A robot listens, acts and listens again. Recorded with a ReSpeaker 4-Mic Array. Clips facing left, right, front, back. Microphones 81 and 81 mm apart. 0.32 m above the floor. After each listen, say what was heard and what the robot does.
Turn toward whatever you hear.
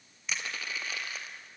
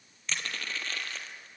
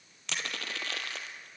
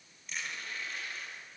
The crushing: 10° left. Turn 10° left.
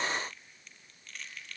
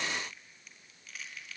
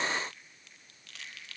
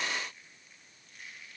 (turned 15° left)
Found it: crushing, straight ahead, 2 to 4 m away.